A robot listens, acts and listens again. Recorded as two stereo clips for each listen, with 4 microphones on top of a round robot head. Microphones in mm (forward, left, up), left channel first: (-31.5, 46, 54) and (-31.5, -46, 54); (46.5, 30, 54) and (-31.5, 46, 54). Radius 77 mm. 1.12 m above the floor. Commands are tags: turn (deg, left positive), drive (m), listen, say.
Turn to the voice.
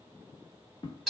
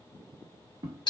<listen/>
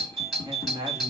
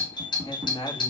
<turn deg="-40"/>
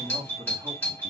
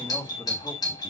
<turn deg="-25"/>
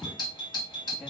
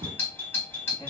<listen/>
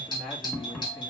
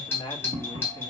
<turn deg="10"/>
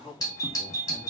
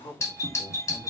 <say>Found it: a man speaking, straight ahead.</say>